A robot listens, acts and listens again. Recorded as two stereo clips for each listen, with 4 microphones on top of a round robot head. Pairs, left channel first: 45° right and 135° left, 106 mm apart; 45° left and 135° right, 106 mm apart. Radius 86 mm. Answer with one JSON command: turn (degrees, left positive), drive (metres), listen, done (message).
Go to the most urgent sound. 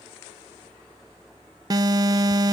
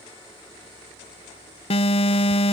{"turn": 80}
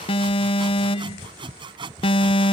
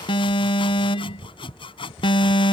{"drive": 1.0}
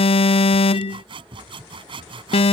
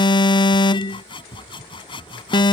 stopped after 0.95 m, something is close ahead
{"done": "Arrived at the alarm, straight ahead."}